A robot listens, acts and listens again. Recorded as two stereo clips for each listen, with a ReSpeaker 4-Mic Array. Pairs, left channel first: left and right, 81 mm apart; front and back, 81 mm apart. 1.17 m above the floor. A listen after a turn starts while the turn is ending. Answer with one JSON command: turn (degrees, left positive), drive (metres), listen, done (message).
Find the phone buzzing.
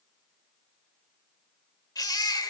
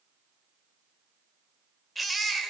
{"listen": true}
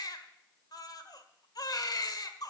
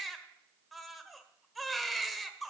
{"listen": true}
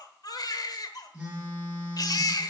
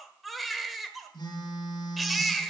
{"turn": -15}
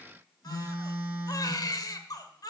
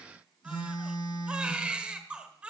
{"done": "Found it: a phone buzzing, straight ahead."}